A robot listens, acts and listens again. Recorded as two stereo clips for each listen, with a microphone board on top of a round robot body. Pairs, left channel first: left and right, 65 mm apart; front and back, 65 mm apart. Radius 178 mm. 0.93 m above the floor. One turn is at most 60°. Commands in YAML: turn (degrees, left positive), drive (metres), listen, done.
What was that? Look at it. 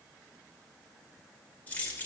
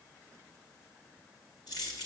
turn: 25
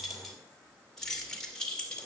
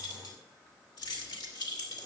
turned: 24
turn: 15
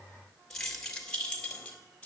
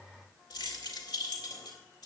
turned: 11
turn: 15
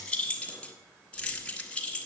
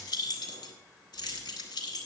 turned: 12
turn: 15
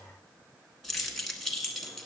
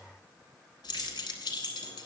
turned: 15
done: "Found it: keys jangling, straight ahead, 1 to 2 m away."